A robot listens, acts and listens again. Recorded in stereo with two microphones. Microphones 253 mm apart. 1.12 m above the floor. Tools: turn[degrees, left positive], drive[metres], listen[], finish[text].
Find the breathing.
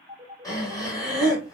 Action: turn[30]
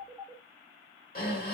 Thought: So it is at 135° left.
Action: turn[135]
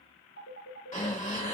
Thought: The breathing is now 45° left.
Action: turn[45]
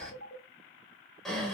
Action: finish[Found it: breathing, straight ahead.]